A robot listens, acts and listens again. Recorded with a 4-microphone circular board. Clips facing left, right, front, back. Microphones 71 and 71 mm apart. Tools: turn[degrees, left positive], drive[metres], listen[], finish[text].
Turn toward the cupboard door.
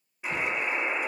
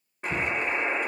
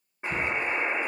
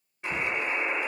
Thought: The cupboard door: 120° right.
Action: turn[-120]
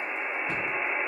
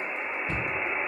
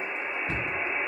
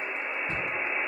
Thought: The cupboard door is now 10° left.
Action: turn[10]
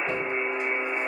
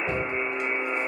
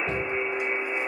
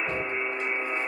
Action: finish[Facing the cupboard door, 1 to 2 m away.]